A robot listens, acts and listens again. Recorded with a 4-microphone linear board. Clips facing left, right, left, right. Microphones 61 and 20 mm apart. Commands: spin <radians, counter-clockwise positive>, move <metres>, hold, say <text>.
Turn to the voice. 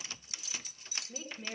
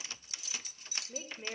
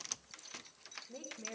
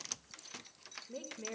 spin -0.44
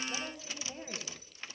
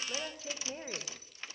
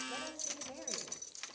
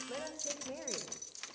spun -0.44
spin -2.09
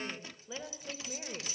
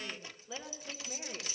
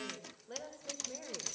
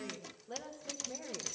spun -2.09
spin 0.17
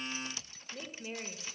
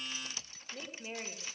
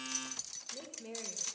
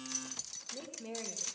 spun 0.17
say Found it: a woman speaking, straight ahead.